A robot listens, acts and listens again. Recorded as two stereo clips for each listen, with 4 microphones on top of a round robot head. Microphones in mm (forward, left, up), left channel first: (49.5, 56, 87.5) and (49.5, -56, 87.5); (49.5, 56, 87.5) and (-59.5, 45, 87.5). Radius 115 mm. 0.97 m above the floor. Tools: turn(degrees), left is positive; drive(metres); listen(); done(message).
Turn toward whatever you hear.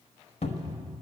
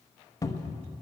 turn(degrees=65)
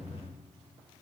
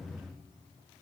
listen()
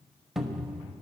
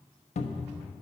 done("Facing the cupboard door, 1 to 2 m away.")